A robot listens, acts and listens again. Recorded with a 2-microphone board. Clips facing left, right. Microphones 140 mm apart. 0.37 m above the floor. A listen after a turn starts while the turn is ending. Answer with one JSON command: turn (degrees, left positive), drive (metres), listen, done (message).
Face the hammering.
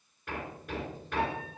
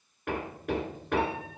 {"turn": -65}
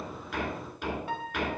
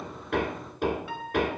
{"turn": -50}
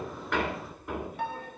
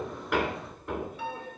{"done": "Found it: hammering, straight ahead, 2 to 4 m away."}